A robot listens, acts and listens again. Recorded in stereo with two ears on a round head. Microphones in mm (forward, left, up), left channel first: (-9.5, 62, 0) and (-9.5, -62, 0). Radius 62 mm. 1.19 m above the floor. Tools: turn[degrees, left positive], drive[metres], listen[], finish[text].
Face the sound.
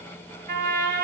Thought: The trumpet: about 65° right or 115° right.
Action: turn[-65]
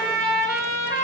Thought: So it is at 20° right.
Action: turn[-20]
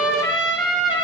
Action: finish[Found it: a trumpet, straight ahead.]